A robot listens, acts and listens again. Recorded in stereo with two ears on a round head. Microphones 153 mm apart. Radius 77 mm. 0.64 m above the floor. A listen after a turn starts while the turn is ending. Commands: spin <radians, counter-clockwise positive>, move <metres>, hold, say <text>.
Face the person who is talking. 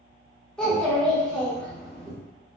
spin 0.52
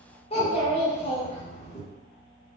spin 2.53
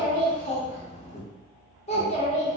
spin 0.61
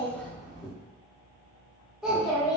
say Found it: a child speaking, straight ahead, under 1 m away.